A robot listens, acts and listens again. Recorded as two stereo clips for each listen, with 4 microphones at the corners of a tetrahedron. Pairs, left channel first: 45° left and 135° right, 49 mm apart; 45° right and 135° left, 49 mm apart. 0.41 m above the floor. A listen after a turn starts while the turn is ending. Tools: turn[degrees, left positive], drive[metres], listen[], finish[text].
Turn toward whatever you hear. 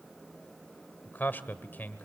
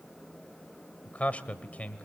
Thought: The man speaking: 10° left.
Action: turn[10]
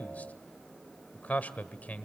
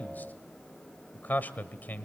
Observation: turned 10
Action: finish[Found it: a man speaking, straight ahead.]